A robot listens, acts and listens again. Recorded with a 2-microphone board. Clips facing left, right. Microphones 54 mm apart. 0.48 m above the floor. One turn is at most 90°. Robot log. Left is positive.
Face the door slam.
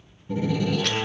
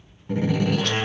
note: The door slam: about 75° right or 105° right.
cmd yaw -75
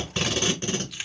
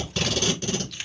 cmd idle
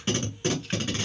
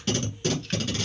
end: I heard a door slam, but can't make it out now. It was about straight ahead or 30° right.